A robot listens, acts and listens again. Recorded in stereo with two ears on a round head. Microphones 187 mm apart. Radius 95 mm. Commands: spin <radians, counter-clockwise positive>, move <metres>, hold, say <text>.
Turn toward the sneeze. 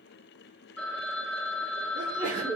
spin -0.61
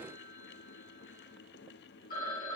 hold
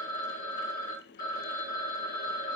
say I heard a sneeze, but can't make it out now. It was about straight ahead or 110° right.